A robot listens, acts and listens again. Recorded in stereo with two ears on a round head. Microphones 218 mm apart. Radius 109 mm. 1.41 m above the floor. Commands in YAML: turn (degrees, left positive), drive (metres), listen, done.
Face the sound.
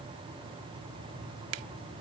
listen: true
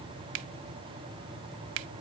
turn: -60
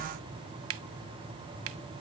turn: -60
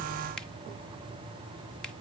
listen: true
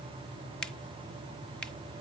listen: true
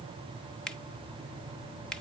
done: "Found it: a finger snap, straight ahead."